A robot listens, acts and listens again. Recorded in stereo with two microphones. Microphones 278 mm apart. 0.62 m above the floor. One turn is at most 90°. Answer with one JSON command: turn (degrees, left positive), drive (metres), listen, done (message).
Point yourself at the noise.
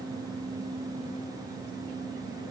{"listen": true}
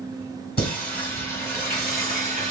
{"turn": 30}
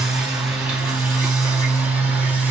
{"done": "Found it: singing, straight ahead, over 4 m away."}